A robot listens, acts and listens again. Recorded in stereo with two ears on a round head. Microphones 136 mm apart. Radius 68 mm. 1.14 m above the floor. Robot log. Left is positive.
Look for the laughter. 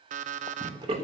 note: The laughter: about 40° right or 140° right.
cmd yaw -40
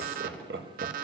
note: So it is at 105° right.
cmd yaw -105
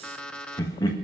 note: The laughter is now 30° left.
cmd yaw +30
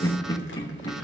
note: The laughter is now 30° left.
cmd yaw +30
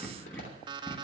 note: The laughter is now 15° left.
cmd yaw +15
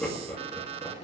note: The laughter is now 10° left.
cmd yaw +10
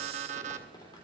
cmd idle
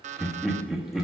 end: Facing the laughter.